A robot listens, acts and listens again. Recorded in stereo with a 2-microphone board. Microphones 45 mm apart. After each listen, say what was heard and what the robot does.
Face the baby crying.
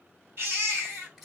The baby crying: about 50° right or 130° right. Turn 50° right.
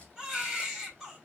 Found it: a baby crying, straight ahead.